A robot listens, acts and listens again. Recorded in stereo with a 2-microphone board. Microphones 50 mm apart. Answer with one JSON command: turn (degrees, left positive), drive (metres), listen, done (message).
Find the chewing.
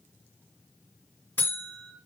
{"listen": true}
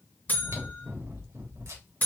{"turn": -90}
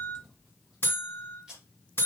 {"done": "Facing the chewing."}